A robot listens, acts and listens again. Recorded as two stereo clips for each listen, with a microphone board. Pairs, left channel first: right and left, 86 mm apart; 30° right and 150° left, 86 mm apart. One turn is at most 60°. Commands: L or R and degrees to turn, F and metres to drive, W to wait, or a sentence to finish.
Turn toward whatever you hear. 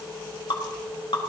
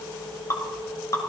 R60
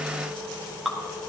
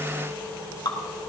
Facing the dripping, 2 to 4 m away.